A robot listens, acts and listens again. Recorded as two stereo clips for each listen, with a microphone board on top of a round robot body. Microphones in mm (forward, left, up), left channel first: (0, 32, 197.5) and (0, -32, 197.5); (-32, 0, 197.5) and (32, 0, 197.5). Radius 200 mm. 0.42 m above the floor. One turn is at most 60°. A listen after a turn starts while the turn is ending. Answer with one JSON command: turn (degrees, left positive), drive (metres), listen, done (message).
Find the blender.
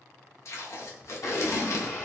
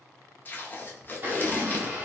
{"turn": 60}
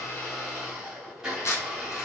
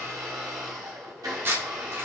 {"turn": -10}
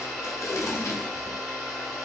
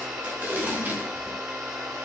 {"done": "Found it: a blender, straight ahead."}